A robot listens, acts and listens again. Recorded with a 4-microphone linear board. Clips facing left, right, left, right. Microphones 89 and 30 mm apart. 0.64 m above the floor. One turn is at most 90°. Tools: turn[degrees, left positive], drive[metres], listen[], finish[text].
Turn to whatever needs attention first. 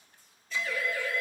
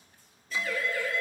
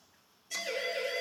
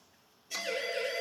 Thought: The siren: about 15° left or 165° left.
Action: turn[15]
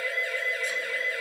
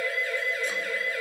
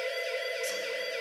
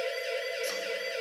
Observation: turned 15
Thought: So it is at 150° left.
Action: turn[90]
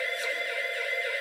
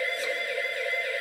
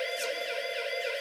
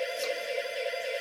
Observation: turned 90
Thought: The siren is now 30° left.
Action: turn[30]
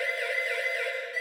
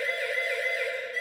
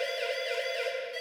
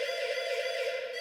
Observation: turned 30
Action: finish[Found it: a siren, straight ahead.]